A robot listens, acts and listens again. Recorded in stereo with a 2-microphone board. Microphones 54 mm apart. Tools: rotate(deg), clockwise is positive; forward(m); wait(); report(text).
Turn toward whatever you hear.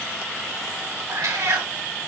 rotate(90)
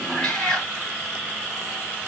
rotate(-10)
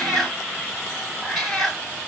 report("Found it: a cat meowing, straight ahead, 2 to 4 m away.")